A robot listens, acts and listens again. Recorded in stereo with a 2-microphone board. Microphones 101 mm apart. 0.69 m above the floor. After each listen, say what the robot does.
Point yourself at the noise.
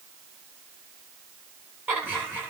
Turn 20° right.
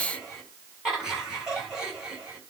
Turn 30° right.
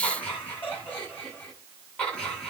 Turn 15° left.
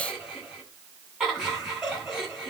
Facing the laughter, over 4 m away.